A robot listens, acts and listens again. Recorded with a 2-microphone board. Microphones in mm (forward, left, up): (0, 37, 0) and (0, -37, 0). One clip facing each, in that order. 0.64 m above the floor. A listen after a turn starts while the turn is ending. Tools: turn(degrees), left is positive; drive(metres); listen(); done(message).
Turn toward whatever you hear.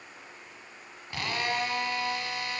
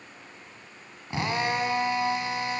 turn(degrees=-25)
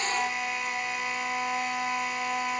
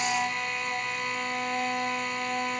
done("Facing the drill.")